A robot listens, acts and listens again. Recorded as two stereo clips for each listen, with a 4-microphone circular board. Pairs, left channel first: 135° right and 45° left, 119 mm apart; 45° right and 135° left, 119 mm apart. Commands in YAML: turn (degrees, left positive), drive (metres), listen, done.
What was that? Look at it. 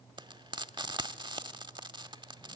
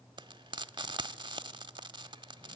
turn: 90
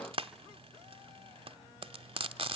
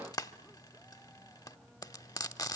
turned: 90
turn: 10
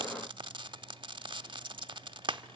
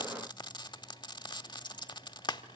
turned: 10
done: "Found it: frying, straight ahead."